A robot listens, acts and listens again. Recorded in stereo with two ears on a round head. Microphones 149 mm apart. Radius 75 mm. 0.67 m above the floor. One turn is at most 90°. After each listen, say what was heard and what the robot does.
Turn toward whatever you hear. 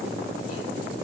Keep listening.
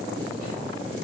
Keep listening.
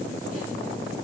I can't make out anything.